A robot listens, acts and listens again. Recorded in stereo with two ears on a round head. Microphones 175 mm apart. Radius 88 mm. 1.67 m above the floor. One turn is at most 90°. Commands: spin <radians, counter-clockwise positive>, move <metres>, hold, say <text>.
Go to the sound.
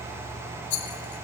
spin 0.96
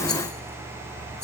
hold
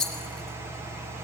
move 1.0
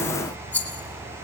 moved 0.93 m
spin 0.17
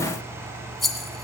move 1.0
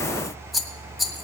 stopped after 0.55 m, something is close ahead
say Arrived at the rattle, straight ahead.